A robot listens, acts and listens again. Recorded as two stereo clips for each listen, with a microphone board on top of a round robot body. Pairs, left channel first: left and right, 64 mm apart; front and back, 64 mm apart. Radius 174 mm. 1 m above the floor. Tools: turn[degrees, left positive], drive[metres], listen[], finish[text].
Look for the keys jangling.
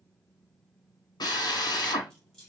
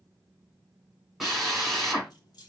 Thought: The keys jangling: 10° left.
Action: turn[10]
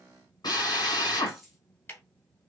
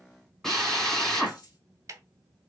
Action: finish[Found it: keys jangling, straight ahead, 1 to 2 m away.]